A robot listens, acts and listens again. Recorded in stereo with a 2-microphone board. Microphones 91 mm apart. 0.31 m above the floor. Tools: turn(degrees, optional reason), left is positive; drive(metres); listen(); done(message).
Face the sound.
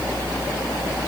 listen()
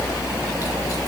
listen()
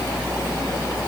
done("I can't make out anything.")